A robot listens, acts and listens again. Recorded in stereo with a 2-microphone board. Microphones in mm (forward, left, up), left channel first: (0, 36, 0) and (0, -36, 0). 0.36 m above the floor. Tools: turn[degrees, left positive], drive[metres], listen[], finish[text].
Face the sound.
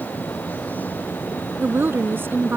Thought: The woman speaking: about 30° right or 150° right.
Action: turn[-30]
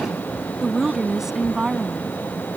Thought: So it is at 10° right.
Action: turn[-10]
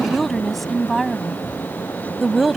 Action: finish[Found it: a woman speaking, straight ahead.]